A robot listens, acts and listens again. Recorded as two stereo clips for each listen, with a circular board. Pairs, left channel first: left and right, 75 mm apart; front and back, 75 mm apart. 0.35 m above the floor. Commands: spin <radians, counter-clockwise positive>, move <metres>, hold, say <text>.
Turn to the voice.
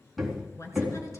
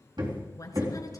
spin 0.70
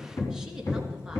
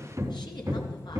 hold
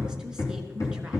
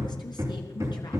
hold
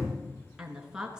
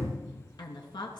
spin -0.17
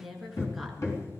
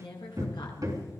say Found it: a woman speaking, straight ahead.